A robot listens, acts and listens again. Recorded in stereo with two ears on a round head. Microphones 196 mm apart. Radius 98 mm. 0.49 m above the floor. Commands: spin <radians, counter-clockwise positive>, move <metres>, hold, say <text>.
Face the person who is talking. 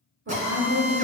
spin -0.96
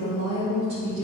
spin -0.61
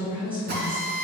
spin -0.17
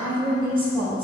spin -0.44
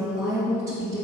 spin -0.35
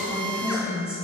spin -0.17
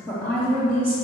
say Facing the woman speaking.